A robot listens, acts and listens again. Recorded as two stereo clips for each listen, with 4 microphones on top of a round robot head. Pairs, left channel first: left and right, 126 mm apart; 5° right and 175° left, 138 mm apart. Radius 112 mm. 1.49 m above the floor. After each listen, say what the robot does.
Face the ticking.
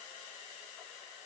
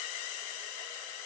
Keep listening.
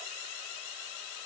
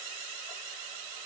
Keep listening.
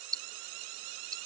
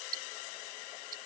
Turn 150° right.
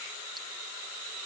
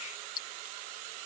Found it: ticking, straight ahead.